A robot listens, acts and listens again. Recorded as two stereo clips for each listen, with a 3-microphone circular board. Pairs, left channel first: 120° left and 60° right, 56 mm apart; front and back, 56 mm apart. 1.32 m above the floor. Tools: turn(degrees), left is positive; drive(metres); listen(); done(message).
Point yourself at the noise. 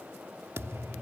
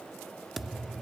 turn(degrees=-95)
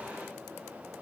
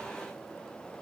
done("Facing where the thud came from. I can't hear it now.")